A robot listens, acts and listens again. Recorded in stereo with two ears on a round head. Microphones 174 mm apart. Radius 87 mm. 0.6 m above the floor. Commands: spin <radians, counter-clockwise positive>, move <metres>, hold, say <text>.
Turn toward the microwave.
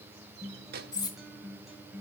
spin -0.87
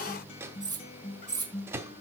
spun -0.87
spin -0.26
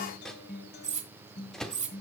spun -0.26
say Facing the microwave.